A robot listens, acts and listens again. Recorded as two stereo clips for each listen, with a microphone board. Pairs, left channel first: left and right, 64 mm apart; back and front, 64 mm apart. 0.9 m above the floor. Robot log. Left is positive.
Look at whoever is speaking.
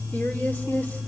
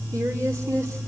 note: The woman speaking: 30° left.
cmd yaw +30
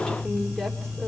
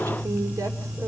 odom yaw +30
note: The woman speaking is now 10° left.
cmd yaw +10
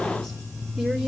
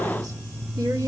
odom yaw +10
end: Found it: a woman speaking, straight ahead, 2 to 4 m away.